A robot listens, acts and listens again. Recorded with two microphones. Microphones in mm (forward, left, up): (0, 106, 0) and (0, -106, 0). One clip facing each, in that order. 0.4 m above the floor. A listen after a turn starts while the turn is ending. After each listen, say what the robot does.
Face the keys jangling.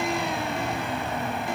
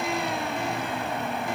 Keep listening.
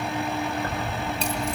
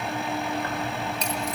Turn 30° left.
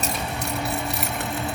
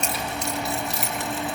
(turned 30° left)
Turn 120° left.
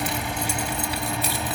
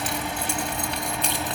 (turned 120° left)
Facing the keys jangling, 2 to 4 m away.